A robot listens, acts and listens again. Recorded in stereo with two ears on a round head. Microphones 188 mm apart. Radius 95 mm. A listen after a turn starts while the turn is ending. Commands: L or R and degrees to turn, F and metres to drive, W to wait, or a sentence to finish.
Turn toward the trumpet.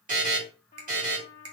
L35
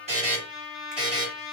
Facing the trumpet.